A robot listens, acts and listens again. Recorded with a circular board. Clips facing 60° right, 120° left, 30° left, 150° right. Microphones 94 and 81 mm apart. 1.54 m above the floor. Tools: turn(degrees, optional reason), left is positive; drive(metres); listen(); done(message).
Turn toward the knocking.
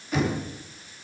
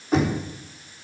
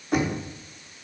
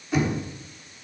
turn(degrees=65, reason="The knocking: 65° left.")
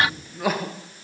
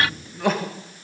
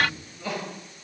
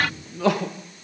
listen()
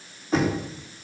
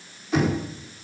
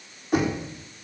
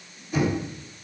done("Facing the knocking.")